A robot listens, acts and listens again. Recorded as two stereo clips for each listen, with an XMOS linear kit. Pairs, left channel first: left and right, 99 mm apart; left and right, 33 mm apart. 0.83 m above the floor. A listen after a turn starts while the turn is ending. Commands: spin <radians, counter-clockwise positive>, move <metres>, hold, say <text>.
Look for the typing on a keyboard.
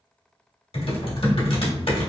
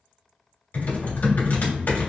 spin 1.13
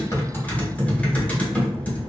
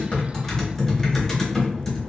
spin 0.26
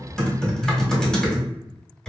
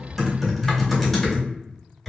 say Facing the typing on a keyboard.